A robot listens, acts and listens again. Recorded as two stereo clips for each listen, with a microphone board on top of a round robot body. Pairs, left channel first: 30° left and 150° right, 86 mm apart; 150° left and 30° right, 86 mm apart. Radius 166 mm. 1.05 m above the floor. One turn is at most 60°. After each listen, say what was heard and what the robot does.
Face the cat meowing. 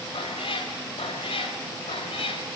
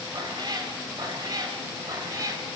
The cat meowing: 25° left. Turn 25° left.
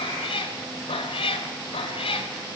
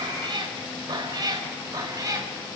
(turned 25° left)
The cat meowing is now 20° left. Turn 20° left.
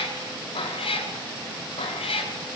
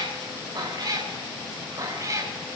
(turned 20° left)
The cat meowing is now 25° left. Turn 25° left.
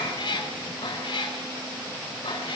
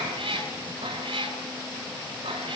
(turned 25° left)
Facing the cat meowing.